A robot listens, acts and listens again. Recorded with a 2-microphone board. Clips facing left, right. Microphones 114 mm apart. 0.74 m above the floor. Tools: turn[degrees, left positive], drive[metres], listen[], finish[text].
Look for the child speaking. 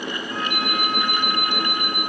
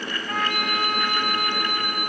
Action: listen[]
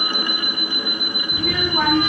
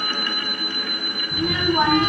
Thought: The child speaking: about 20° right or 160° right.
Action: turn[-20]
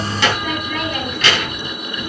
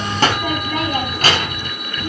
Thought: The child speaking: about 40° right or 140° right.
Action: turn[-40]
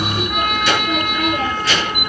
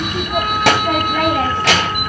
Thought: So it is at 100° right.
Action: turn[-100]
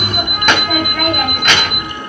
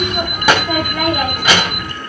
Thought: The child speaking is now 10° right.
Action: turn[-10]
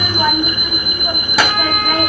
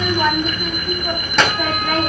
Action: finish[Facing the child speaking, 2 to 4 m away.]